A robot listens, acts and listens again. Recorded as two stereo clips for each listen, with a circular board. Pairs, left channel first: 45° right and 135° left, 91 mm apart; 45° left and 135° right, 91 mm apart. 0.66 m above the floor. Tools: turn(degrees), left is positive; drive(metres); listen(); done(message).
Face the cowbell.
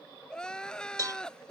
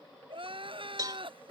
turn(degrees=180)
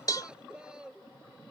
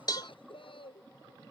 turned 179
done("Facing the cowbell.")